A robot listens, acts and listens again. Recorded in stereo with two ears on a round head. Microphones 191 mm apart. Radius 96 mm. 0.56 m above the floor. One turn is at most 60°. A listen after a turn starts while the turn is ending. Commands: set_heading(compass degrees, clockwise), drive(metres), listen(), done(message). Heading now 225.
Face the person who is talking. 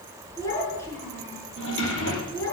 set_heading(195)
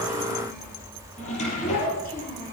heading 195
set_heading(135)
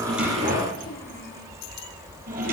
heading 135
set_heading(75)
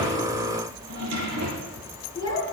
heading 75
set_heading(55)
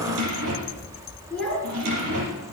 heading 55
done("Facing the child speaking, over 4 m away.")